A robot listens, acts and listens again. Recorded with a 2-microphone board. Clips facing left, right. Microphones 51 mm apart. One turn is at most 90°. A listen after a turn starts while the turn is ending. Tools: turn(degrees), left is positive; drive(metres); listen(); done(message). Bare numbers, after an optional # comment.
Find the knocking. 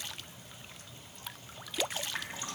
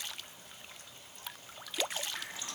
listen()
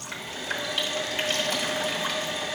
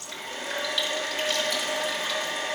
listen()
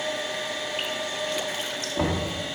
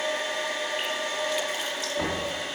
# The knocking: about 20° left or 160° left.
turn(20)
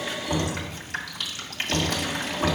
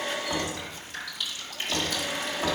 done("Found it: knocking, straight ahead.")